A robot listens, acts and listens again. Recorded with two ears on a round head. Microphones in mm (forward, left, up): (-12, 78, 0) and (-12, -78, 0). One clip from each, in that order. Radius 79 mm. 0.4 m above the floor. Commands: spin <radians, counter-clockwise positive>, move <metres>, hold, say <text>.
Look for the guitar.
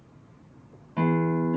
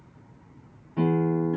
spin 0.70
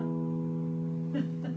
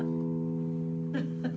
say Found it: a guitar, straight ahead.